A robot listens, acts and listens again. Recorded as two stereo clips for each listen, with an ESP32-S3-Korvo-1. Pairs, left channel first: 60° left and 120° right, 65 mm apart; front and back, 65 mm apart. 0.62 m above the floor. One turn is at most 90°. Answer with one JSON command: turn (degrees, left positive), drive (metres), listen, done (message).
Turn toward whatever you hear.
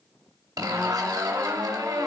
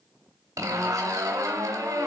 {"turn": -90}
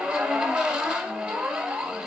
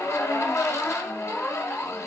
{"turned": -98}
{"turn": -45}
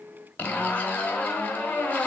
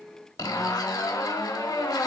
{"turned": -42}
{"done": "Found it: a zipper, straight ahead."}